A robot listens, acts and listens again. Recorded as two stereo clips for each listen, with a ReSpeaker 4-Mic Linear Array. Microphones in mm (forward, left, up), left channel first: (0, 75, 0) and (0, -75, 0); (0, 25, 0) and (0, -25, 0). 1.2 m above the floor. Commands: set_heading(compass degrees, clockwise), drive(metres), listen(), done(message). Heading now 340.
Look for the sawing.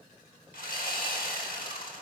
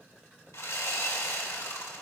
set_heading(250)
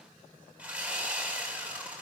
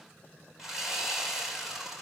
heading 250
set_heading(260)
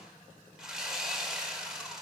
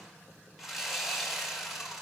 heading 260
done("Found it: sawing, straight ahead, 2 to 4 m away.")